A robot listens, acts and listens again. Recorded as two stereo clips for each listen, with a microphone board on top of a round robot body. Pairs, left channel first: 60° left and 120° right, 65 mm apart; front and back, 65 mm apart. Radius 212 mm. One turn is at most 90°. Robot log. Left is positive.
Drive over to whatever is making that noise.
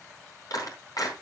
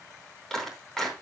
note: The clap: 80° left.
cmd yaw +80
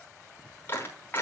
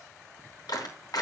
cmd fwd 1.0
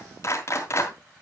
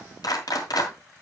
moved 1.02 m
note: The clap is now 10° left.
cmd yaw +10
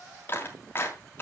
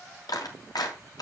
cmd fwd 1.0
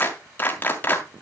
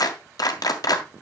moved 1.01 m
cmd fwd 1.0
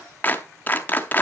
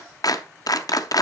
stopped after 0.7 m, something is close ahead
end: I am next to the clap.